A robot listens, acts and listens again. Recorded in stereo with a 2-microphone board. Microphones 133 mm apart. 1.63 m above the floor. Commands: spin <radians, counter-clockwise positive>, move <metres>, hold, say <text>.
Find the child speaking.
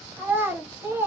spin -0.26
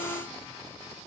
hold
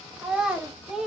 say Facing the child speaking.